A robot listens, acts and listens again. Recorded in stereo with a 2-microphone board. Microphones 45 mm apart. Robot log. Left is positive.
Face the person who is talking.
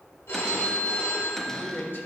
note: The man speaking: about 50° left or 130° left.
cmd yaw +50
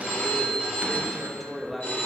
end: Facing the man speaking.